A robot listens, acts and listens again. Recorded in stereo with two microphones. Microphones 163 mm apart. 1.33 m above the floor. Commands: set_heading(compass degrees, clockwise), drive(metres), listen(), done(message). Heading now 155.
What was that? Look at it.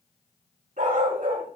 set_heading(210)
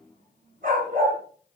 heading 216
set_heading(271)
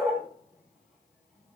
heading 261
set_heading(271)
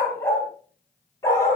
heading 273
set_heading(258)
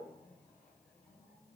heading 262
listen()
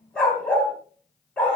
done("Found it: a dog barking, straight ahead, 2 to 4 m away.")